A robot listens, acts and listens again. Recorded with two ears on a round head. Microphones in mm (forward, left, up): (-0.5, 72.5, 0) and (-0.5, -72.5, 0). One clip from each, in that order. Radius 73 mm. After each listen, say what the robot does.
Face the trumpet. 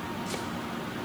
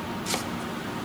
Keep listening.
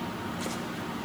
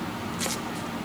Keep listening.
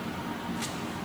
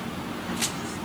I can't make out a trumpet.